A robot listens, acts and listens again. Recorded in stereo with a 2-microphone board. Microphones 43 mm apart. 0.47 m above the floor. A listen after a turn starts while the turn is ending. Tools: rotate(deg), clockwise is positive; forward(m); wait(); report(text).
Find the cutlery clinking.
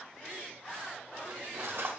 rotate(65)
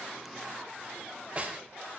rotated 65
rotate(30)
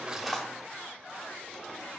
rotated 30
wait()
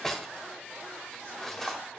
rotate(-15)
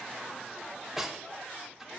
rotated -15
report("Found it: cutlery clinking, straight ahead, 1 to 2 m away.")